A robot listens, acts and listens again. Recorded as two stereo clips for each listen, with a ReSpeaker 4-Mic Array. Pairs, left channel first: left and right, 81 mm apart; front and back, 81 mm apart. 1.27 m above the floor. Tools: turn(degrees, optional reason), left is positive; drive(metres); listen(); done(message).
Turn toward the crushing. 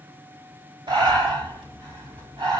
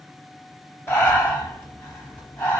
listen()
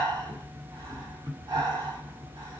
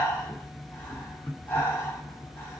listen()
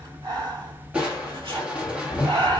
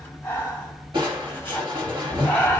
turn(degrees=-165, reason="The crushing: 165° right.")
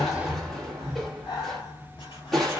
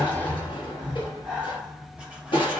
done("Facing the crushing, 1 to 2 m away.")